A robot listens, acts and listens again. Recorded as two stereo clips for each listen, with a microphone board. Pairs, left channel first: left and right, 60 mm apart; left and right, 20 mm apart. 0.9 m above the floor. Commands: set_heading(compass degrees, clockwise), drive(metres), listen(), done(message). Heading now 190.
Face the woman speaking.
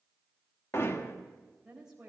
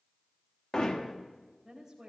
set_heading(220)
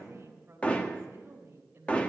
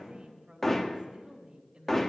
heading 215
set_heading(0)
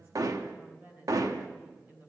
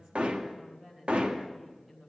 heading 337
set_heading(2)
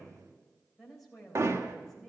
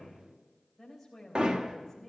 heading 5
done("Facing the woman speaking, 2 to 4 m away.")